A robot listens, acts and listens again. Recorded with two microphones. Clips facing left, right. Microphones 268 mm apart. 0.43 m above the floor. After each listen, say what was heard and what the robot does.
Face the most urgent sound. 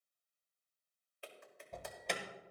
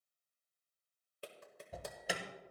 Turn 30° right.
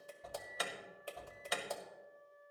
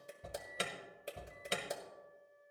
So it is at 145° right. Turn 145° right.
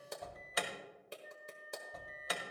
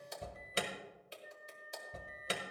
The alarm is now 35° right. Turn 35° right.
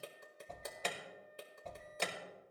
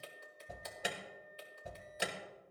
The alarm is now 15° right. Turn 15° right.
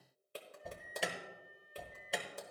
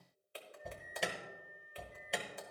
Facing the alarm.